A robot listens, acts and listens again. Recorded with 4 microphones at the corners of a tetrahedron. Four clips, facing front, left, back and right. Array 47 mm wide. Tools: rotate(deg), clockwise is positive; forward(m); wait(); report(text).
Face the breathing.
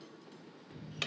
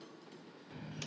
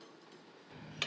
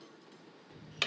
wait()
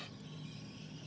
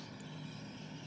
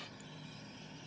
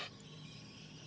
wait()
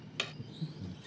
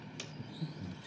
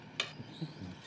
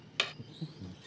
rotate(160)
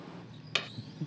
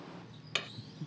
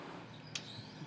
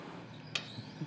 rotate(50)
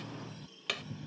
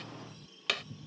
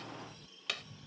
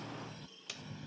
wait()
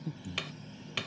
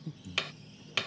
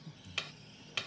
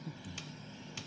rotate(-10)
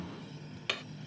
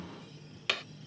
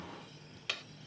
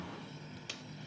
wait()
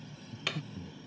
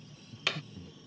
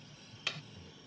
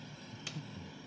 report("Facing the breathing.")